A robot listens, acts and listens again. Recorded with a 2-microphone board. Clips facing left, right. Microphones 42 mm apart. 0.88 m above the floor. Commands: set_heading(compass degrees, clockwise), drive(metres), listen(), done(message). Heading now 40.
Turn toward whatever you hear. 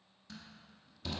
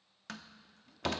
set_heading(115)
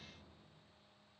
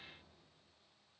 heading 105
listen()
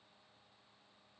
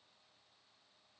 done("I heard a door slam, but can't make it out now. It was about 10° right or 40° right.")